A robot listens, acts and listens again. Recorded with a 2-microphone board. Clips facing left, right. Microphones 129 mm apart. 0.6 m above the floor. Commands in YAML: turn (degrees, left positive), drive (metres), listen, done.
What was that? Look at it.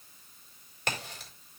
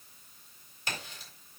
turn: 70
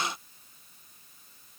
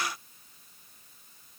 listen: true
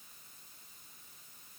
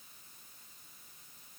done: "I heard a crack, but can't make it out now. It was about straight ahead or 40° left."